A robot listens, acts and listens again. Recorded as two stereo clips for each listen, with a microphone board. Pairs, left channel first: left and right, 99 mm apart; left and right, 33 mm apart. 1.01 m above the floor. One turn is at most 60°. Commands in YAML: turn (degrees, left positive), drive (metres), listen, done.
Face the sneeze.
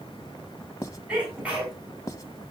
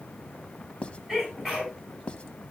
turn: -30
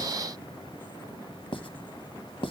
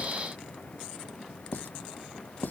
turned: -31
listen: true
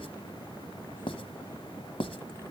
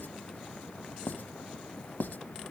done: "I heard a sneeze, but can't make it out now. It was about 20° left or 135° right."